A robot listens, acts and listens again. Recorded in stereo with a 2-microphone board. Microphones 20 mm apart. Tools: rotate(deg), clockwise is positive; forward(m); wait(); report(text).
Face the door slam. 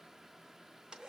wait()
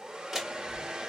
rotate(30)
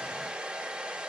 wait()
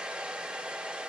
report("I heard a door slam, but can't make it out now. It was about straight ahead or 120° right.")